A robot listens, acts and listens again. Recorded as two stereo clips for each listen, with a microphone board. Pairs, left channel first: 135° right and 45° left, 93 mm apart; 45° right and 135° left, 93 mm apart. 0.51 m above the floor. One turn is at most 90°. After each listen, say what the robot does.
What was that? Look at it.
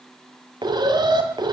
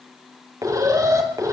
Turn 85° left.
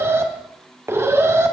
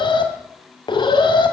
Turn 15° right.
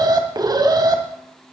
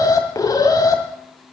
Facing the alarm.